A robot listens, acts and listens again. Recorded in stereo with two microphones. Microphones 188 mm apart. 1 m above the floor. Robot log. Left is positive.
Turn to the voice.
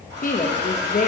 note: The woman speaking: about 45° left or 135° left.
cmd yaw +45
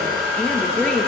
end: Found it: a woman speaking, straight ahead.